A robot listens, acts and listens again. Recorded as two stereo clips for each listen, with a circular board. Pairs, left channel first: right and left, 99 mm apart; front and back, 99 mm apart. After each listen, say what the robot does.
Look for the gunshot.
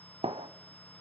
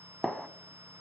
Turn 90° left.
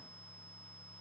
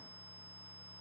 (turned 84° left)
Facing where the gunshot came from. I can't hear it now.